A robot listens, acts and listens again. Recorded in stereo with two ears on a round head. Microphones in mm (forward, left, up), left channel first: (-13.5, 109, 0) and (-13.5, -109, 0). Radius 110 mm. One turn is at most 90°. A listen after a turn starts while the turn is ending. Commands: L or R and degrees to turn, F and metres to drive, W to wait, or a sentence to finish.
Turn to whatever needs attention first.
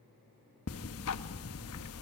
W
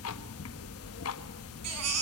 R75
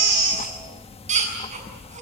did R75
R30
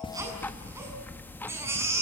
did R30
R10
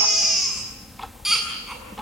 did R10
Found it: a baby crying, straight ahead.